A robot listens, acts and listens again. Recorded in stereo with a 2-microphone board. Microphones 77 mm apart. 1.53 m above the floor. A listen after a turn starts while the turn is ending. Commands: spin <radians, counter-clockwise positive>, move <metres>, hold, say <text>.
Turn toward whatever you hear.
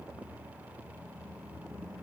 hold
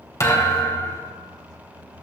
spin 0.70
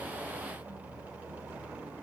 hold
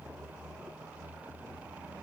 say I heard a thud, but can't make it out now. It was about straight ahead or 100° left.